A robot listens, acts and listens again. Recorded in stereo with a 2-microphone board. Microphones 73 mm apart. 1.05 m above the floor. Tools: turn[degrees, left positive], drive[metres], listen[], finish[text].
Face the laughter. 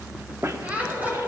Thought: The laughter: about 20° right or 160° right.
Action: turn[-20]
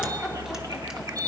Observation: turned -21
Action: listen[]
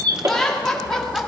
Action: finish[Found it: laughter, straight ahead, 2 to 4 m away.]